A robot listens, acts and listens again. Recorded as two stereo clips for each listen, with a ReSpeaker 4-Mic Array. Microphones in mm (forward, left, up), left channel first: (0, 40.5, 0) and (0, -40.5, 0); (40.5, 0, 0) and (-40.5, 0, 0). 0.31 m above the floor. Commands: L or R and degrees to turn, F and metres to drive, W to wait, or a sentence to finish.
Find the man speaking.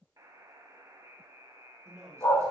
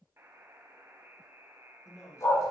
R45
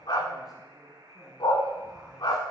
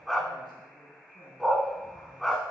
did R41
Facing the man speaking, 2 to 4 m away.